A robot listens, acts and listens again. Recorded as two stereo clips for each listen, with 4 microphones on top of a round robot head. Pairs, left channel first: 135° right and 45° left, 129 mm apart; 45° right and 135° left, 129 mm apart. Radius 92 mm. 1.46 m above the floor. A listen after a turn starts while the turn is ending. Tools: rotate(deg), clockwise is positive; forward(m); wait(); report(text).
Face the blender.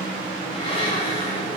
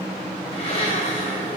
rotate(85)
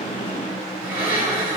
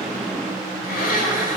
rotate(30)
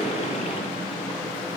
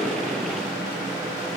wait()
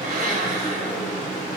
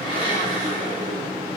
rotate(-15)
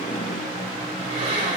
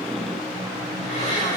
report("Found it: a blender, straight ahead, over 4 m away.")